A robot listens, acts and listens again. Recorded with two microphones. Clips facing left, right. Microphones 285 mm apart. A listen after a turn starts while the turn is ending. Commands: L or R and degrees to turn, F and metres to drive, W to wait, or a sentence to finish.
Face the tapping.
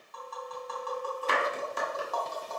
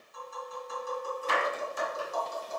L70
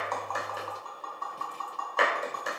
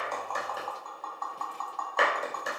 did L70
L35
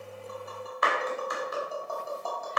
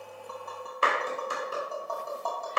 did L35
Facing the tapping, 2 to 4 m away.